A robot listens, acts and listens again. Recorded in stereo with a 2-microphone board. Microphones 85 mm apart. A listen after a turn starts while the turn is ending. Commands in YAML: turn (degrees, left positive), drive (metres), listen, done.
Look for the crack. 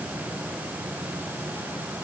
listen: true
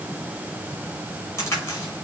turn: 30
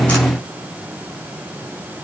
listen: true
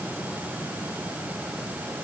done: "I heard a crack, but can't make it out now. It was about straight ahead or 120° left."